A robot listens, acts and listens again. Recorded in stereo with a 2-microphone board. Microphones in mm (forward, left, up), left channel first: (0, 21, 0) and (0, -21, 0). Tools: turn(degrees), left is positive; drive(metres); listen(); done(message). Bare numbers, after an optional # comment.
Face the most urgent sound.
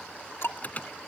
# The alarm: about 40° left or 140° left.
turn(40)
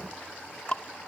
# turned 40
listen()
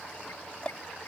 listen()
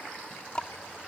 done("I heard an alarm, but can't make it out now. It was about straight ahead or 100° left.")